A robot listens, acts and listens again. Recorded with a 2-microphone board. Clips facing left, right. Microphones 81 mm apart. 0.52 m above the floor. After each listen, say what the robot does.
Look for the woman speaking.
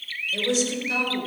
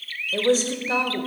Turn 40° right.
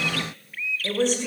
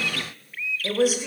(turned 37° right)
Turn 10° right.
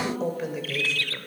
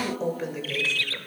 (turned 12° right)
Facing the woman speaking.